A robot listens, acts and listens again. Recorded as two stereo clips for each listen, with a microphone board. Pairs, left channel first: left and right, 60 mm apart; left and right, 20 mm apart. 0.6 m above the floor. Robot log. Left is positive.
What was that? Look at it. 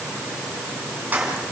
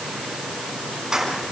note: The keys jangling: about 30° right or 150° right.
cmd yaw -30
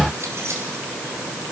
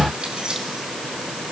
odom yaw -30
cmd idle
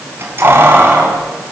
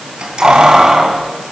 note: The keys jangling: about 40° right or 140° right.
cmd yaw -40
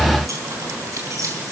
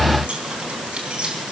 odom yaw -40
note: So it is at 110° right.
cmd yaw -110
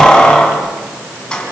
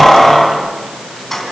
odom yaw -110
note: The keys jangling is now 15° left.
cmd yaw +15
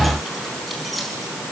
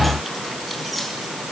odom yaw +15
cmd idle
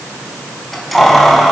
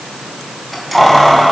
end: Found it: keys jangling, straight ahead.